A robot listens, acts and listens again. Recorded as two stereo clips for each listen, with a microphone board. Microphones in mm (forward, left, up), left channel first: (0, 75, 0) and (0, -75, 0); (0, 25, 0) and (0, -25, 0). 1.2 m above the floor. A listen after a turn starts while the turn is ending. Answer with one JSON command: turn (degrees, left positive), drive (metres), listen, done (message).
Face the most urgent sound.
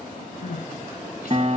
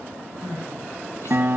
{"turn": 90}
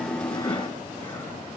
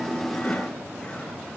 {"listen": true}
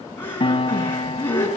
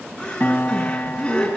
{"turn": 15}
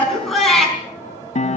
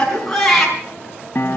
{"done": "Found it: crying, straight ahead, over 4 m away."}